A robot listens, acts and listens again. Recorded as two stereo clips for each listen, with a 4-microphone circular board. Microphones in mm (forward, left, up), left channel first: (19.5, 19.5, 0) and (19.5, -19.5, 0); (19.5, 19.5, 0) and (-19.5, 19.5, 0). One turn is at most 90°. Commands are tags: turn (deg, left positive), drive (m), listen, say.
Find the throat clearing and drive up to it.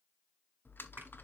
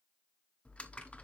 <listen/>
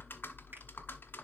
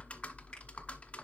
<listen/>
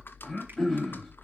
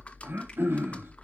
<turn deg="90"/>
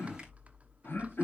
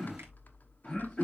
<turn deg="60"/>
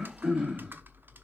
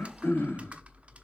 <turn deg="-20"/>
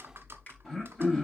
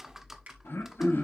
<drive m="1.0"/>
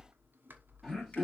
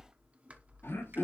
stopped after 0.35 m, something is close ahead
<say>Something is in my way. I am facing the throat clearing but have not reached it.</say>